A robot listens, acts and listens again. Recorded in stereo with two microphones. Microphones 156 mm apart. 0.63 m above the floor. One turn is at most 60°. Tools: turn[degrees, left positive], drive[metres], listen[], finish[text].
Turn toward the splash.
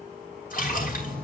Thought: The splash: about 60° left or 120° left.
Action: turn[60]
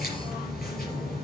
Action: listen[]
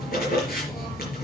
Action: finish[I heard a splash, but can't make it out now. It was about straight ahead or 60° left.]